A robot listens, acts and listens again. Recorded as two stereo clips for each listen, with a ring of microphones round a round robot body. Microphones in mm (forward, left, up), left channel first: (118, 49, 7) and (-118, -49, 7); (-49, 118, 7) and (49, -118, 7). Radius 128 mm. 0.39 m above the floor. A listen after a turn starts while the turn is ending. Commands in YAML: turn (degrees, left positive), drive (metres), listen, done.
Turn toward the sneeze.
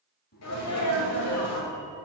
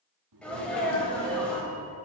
turn: 25
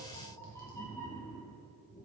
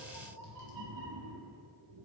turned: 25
done: "I heard a sneeze from this way, but can't make it out now."